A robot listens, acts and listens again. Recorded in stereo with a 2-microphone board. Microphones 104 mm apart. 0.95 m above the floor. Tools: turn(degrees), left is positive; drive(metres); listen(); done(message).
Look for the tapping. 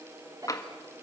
turn(degrees=35)
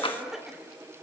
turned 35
turn(degrees=105)
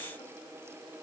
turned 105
listen()
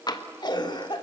turn(degrees=55)
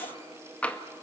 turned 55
turn(degrees=15)
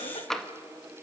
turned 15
done("Found it: tapping, straight ahead, 1 to 2 m away.")